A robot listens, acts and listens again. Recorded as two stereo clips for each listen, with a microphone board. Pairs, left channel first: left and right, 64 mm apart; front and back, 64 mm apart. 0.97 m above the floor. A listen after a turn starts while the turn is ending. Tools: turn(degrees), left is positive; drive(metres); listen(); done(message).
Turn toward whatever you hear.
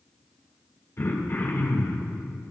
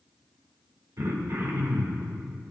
turn(degrees=140)
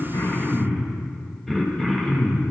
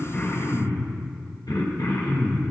done("Facing the throat clearing.")